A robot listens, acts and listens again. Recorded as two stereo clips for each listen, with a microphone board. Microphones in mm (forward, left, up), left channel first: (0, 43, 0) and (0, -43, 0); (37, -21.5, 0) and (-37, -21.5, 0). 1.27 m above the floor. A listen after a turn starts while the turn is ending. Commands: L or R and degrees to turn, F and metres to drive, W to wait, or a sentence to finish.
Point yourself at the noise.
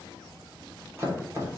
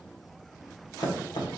R30
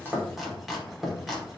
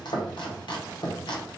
Facing the chopping, under 1 m away.